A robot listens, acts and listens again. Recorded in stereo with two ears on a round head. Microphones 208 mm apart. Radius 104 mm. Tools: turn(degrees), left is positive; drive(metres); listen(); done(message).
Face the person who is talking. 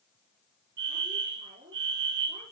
turn(degrees=-25)
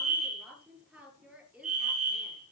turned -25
done("Facing the woman speaking, over 4 m away.")